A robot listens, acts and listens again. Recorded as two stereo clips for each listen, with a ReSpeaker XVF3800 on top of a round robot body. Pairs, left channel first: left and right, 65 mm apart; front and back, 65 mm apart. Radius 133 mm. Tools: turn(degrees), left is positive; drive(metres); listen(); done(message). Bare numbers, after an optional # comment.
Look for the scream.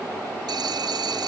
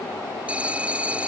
listen()
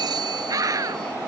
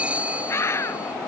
# The scream: 55° right.
turn(-55)
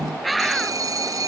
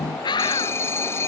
done("Found it: a scream, straight ahead.")